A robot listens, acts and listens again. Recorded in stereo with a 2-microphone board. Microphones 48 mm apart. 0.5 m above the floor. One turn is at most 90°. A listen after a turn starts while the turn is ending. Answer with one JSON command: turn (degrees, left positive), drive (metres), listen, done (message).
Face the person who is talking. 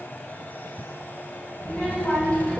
{"turn": 30}
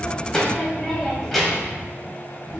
{"done": "Found it: a child speaking, straight ahead, 2 to 4 m away."}